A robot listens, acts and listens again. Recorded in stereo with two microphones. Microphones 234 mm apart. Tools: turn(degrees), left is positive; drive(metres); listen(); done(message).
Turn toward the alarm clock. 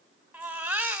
listen()
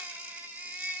listen()
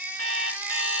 turn(degrees=90)
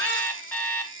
done("Found it: an alarm clock, straight ahead.")